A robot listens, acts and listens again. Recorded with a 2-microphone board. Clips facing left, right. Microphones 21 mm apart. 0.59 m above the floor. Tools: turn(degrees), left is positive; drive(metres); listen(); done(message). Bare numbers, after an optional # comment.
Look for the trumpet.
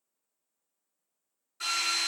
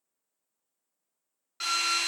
listen()
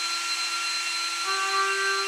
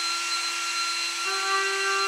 turn(30)
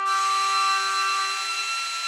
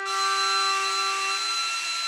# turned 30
# So it is at 150° left.
turn(150)
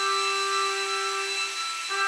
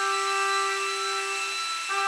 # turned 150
# The trumpet is now 20° right.
turn(-20)
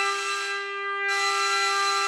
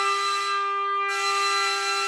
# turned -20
done("Facing the trumpet.")